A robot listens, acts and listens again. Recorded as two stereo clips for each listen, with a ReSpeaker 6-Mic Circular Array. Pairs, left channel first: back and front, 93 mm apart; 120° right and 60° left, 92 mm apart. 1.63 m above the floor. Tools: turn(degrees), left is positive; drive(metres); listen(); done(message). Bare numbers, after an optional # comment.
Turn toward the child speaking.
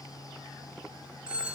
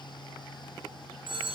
listen()
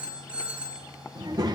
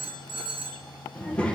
# The child speaking: 40° right.
turn(-40)
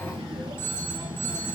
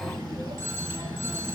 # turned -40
# The child speaking is now 30° left.
turn(30)
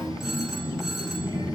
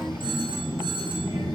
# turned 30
# The child speaking is now 30° left.
turn(30)
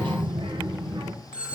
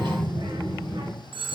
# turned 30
# The child speaking is now 25° left.
turn(25)
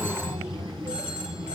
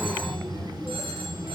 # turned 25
# The child speaking is now 10° left.
turn(10)
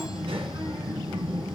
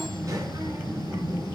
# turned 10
done("Facing the child speaking, 1 to 2 m away.")